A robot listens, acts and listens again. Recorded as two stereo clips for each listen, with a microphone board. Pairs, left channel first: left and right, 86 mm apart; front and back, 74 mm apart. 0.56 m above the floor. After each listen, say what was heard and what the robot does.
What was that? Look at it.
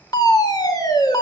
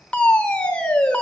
The fire alarm: 70° left. Turn 70° left.
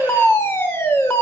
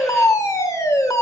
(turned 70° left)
The fire alarm is now 35° left. Turn 35° left.
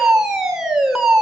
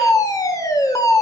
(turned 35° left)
The fire alarm is now 10° right. Turn 10° right.
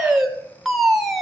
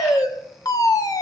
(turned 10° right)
Found it: a fire alarm, straight ahead, 2 to 4 m away.